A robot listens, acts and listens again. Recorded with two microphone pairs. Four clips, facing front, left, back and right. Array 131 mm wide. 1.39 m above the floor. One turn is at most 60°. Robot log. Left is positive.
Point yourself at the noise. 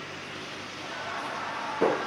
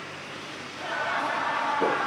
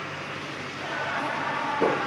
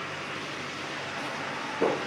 note: The laughter: 100° left.
cmd yaw +60
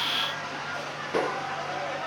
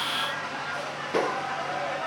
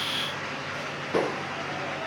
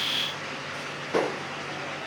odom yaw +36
note: The laughter is now 55° left.
cmd yaw +55
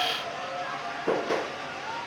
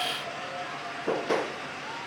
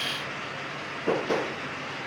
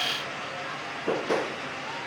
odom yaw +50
cmd idle
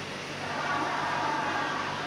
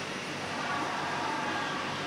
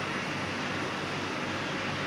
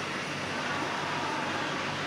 cmd idle
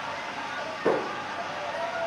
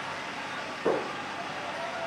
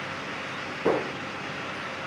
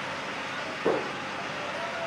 end: Found it: laughter, straight ahead.